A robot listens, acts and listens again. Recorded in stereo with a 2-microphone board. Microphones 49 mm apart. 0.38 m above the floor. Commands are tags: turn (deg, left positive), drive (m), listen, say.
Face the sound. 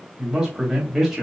<turn deg="-30"/>
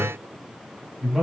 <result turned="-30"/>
<turn deg="-30"/>
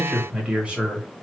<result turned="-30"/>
<turn deg="-160"/>
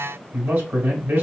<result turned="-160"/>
<turn deg="-45"/>
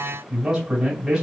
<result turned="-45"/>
<turn deg="-10"/>
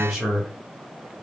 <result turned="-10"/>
<say>Facing the man speaking.</say>